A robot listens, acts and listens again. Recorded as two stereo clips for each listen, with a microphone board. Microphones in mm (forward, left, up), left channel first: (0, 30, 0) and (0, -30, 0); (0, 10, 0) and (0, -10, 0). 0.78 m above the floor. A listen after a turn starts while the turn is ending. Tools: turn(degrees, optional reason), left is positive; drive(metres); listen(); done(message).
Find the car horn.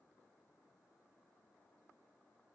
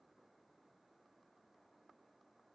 listen()
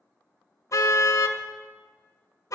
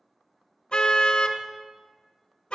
turn(degrees=65, reason="The car horn: about 65° left or 115° left.")
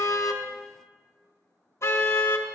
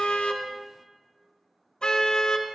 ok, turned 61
turn(degrees=50, reason="So it is at 50° left.")
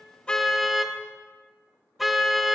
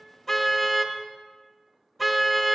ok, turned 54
done("Facing the car horn, 2 to 4 m away.")